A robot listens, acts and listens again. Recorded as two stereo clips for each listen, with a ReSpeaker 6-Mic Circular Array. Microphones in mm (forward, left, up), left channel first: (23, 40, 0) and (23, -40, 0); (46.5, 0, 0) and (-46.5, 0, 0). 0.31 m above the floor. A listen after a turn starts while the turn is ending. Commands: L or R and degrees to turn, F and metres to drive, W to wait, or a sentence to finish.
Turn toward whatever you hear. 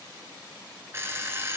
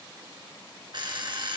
R145
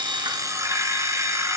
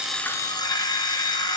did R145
R40
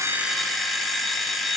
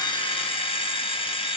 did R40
Facing the alarm clock.